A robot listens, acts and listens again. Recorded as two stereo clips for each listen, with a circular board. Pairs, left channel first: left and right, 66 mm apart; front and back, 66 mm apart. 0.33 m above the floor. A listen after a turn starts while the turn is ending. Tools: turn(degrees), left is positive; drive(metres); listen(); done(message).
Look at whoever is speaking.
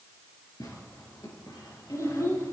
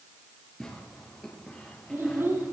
turn(degrees=130)
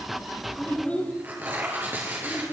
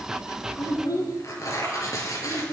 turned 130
turn(degrees=20)
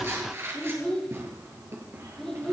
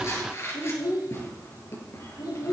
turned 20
done("Found it: a child speaking, straight ahead, over 4 m away.")